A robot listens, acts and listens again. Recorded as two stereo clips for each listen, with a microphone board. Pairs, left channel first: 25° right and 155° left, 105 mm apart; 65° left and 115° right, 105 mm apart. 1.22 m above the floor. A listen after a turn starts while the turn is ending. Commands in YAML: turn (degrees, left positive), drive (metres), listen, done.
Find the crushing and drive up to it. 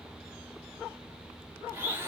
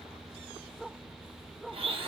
listen: true
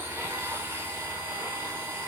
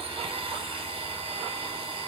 listen: true
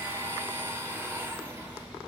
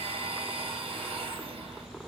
done: "I can't make out crushing, only a blender."